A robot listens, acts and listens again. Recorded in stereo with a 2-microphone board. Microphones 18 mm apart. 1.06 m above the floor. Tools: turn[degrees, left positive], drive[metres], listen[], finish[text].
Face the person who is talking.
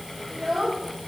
Action: turn[30]
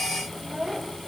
Thought: So it is at 30° right.
Action: turn[-30]
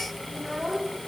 Thought: The child speaking is now 10° left.
Action: turn[10]
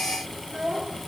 Action: finish[Found it: a child speaking, straight ahead.]